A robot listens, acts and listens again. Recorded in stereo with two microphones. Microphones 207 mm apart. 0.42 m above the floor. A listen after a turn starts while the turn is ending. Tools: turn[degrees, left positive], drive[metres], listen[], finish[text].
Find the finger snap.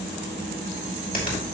Thought: The finger snap: about 45° left or 135° left.
Action: turn[45]
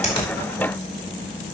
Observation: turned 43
Action: listen[]
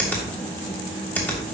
Thought: So it is at 10° left.
Action: turn[10]
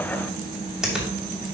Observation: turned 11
Action: finish[Found it: a finger snap, straight ahead.]